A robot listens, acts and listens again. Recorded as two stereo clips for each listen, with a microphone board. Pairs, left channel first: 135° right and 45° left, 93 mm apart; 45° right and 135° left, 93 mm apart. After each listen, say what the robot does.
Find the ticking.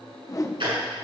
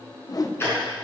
Turn 20° left.
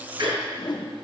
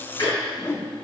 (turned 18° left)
Facing the ticking, over 4 m away.